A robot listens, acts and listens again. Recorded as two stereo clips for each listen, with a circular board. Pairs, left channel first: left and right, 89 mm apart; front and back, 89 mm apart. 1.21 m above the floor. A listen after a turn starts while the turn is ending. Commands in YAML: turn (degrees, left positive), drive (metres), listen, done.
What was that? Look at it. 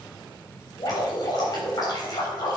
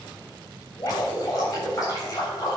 turn: 50
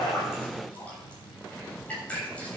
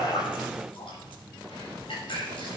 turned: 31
turn: 15
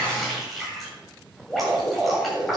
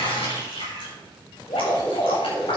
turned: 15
done: "Facing the dripping."